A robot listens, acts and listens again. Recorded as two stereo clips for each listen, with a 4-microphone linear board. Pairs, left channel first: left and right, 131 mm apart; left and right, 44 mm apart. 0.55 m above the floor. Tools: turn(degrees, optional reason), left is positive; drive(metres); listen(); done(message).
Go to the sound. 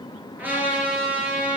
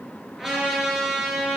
turn(degrees=-30)
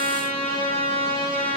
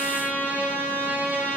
turn(degrees=-135, reason="So it is at 135° right.")
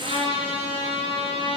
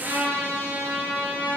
turn(degrees=-45, reason="The trumpet is now 45° right.")
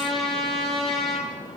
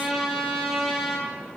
drive(metres=1.0)
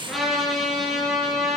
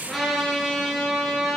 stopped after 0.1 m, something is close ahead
done("Blocked. The trumpet is further on, straight ahead.")